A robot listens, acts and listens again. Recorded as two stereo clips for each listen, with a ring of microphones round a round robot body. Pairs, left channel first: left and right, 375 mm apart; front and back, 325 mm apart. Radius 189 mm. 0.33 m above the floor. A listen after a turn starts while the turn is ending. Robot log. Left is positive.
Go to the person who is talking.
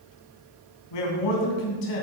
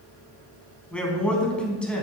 note: The man speaking: 85° left.
cmd yaw +85
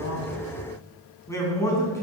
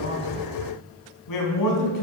note: The man speaking is now 10° left.
cmd yaw +10
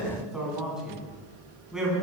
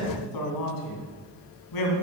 cmd fwd 1.0
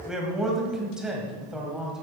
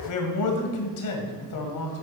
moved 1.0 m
cmd fwd 1.0
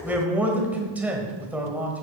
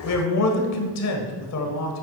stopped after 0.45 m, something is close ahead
end: Arrived at the man speaking, straight ahead.